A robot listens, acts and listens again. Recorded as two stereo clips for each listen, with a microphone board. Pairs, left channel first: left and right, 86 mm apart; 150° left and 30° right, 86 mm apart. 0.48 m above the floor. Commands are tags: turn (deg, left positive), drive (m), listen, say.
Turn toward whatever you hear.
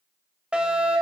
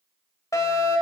<turn deg="-165"/>
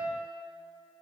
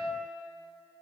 <listen/>
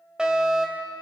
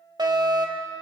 <turn deg="-10"/>
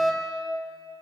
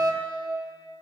<say>Found it: a fire alarm, straight ahead.</say>